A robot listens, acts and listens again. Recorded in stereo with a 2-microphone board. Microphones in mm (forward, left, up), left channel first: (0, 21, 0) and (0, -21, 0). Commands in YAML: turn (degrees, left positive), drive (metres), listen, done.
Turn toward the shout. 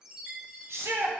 turn: -70
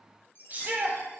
turn: -40
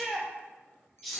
done: "Facing the shout, under 1 m away."